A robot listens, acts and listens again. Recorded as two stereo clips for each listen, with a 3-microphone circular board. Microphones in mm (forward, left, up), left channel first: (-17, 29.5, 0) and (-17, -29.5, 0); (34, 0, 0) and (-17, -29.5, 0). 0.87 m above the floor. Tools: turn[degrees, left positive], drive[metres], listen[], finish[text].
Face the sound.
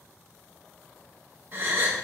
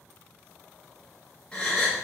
Thought: The gasp: 45° right.
Action: turn[-45]
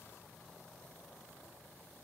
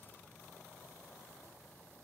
Action: finish[Facing where the gasp came from. I can't hear it now.]